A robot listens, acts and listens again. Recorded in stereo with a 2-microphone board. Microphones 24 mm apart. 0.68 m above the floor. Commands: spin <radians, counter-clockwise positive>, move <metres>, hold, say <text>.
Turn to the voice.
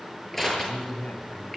spin 1.22
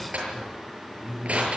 spin 0.61
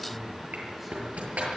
hold
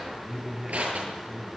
say Found it: a man speaking, straight ahead, over 4 m away.